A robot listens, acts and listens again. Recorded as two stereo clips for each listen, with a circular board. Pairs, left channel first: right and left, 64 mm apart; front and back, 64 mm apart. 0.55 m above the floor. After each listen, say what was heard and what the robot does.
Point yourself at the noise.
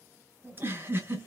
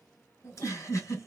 The giggle: 35° left. Turn 35° left.
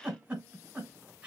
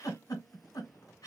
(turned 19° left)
The giggle is now 15° left. Turn 15° left.
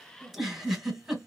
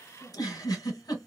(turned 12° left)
Found it: a giggle, straight ahead.